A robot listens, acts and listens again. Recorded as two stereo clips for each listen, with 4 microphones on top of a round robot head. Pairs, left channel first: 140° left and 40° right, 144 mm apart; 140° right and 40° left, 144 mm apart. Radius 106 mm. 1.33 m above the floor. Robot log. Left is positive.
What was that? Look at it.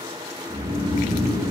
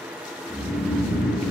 note: The snoring: 75° right.
cmd yaw -75
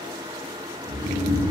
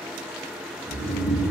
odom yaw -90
note: The snoring is now 10° left.
cmd yaw +10
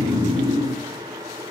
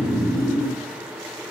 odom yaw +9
end: Found it: snoring, straight ahead.